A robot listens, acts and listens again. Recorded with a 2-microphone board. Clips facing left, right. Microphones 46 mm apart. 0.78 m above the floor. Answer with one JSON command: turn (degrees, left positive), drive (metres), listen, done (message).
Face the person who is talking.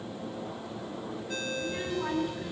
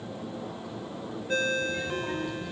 {"turn": 50}
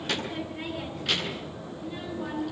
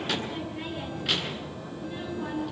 {"done": "Facing the child speaking."}